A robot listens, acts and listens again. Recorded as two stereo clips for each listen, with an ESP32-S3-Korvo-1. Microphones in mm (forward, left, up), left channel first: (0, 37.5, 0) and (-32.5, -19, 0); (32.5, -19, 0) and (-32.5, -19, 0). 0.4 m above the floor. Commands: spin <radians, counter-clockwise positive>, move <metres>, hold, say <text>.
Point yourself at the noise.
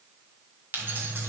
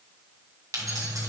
spin -2.97
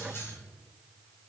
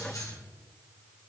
spin 0.26
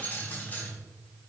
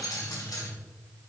say Facing the keys jangling, 1 to 2 m away.